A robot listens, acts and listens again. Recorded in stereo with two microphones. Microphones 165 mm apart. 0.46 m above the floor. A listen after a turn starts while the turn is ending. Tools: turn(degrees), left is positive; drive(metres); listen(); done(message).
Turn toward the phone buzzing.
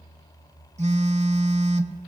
turn(degrees=-45)
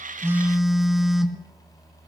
done("Facing the phone buzzing.")